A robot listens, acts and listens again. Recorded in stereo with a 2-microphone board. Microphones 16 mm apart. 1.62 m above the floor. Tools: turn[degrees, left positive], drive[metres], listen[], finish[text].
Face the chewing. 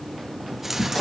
Thought: The chewing: about 20° right or 160° right.
Action: turn[-20]
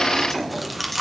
Action: finish[Facing the chewing, 1 to 2 m away.]